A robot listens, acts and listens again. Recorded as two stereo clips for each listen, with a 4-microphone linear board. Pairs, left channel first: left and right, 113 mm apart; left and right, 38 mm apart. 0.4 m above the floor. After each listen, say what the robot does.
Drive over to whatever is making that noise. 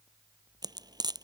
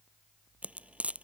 Turn 35° right.
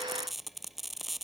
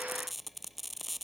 Drive 1.0 m forward.
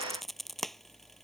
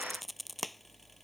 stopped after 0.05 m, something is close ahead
Blocked. The frying is further on, straight ahead.